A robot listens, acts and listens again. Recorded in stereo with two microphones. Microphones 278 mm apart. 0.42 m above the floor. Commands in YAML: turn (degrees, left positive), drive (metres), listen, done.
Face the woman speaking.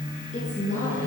turn: 25
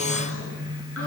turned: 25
listen: true
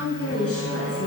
turn: 125
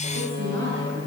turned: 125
turn: -45
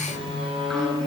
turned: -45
listen: true
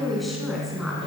done: "Found it: a woman speaking, straight ahead, over 4 m away."